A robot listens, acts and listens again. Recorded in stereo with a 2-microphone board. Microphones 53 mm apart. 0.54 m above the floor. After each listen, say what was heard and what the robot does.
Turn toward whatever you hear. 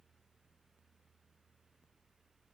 Keep listening.
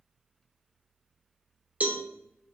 The cowbell: about 25° right or 155° right. Turn 25° right.
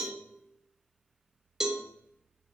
So it is at 10° right. Turn 10° right.
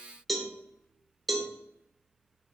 Found it: a cowbell, straight ahead.